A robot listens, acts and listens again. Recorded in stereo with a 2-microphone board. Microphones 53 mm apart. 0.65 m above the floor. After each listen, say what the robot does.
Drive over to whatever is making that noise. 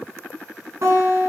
Turn 70° right.
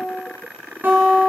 Turn 40° right.
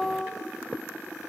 Drive 1.0 m forward.
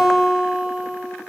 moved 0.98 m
Drive 1.0 m forward.
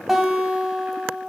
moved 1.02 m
Drive 1.0 m forward.
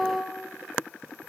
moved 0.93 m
Drive 1.0 m forward.
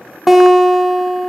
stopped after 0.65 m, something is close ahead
Arrived at the guitar, straight ahead.